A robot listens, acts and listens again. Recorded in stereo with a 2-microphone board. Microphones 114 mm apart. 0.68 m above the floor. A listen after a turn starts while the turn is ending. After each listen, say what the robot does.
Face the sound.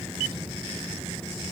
Keep listening.
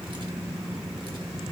Keep listening.
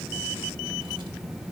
I can't make out anything to turn to.